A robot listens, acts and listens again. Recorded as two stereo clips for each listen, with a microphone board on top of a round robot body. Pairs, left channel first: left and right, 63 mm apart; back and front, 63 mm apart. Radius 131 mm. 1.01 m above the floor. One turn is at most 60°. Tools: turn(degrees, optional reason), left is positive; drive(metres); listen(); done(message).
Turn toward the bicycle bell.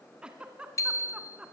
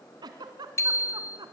turn(degrees=60, reason="The bicycle bell: 135° left.")
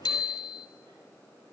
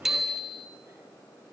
turn(degrees=60, reason="The bicycle bell is now 85° left.")
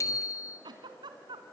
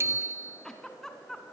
turn(degrees=50, reason="The bicycle bell is now 50° left.")
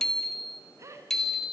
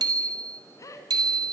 done("Facing the bicycle bell, 2 to 4 m away.")